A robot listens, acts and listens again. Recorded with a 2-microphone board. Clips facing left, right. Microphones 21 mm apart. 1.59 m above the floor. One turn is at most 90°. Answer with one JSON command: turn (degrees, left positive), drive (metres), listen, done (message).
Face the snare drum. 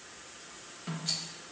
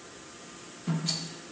{"turn": 15}
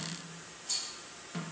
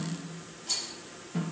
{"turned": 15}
{"turn": 90}
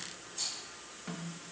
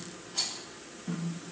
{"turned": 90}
{"turn": 60}
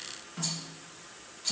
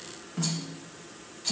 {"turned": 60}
{"done": "Found it: a snare drum, straight ahead, 2 to 4 m away."}